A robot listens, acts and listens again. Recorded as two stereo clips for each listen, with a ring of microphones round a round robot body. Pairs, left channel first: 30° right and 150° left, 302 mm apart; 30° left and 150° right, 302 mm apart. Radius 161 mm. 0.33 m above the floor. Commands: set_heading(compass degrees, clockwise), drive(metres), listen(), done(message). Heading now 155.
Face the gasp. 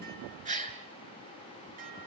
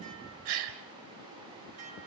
set_heading(300)
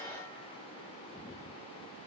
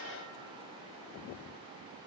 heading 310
set_heading(300)
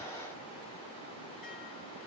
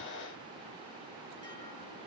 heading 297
done("I heard a gasp from this way, but can't make it out now.")